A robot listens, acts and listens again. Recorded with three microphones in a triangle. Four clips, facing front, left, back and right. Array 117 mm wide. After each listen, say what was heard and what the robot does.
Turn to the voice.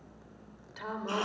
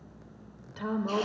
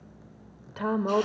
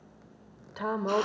The woman speaking: 140° right. Turn 140° right.
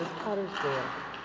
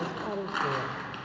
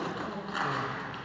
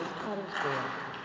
Facing the woman speaking, 1 to 2 m away.